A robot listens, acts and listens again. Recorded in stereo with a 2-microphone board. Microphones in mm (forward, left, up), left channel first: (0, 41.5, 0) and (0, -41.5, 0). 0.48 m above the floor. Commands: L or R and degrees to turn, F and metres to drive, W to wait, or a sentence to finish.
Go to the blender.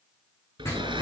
R75
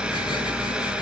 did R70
R10
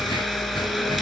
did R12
F1.0
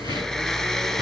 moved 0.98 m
L10
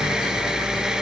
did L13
F1.0
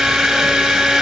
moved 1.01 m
F1.0
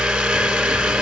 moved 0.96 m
F1.0
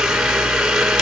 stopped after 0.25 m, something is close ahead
Arrived at the blender, straight ahead.